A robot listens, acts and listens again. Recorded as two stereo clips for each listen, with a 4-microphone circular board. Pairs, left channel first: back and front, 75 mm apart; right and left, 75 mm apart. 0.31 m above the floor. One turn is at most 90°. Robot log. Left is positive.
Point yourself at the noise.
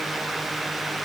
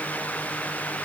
cmd idle
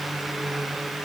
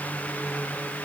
cmd idle
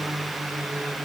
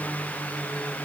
end: I can't make out anything to turn to.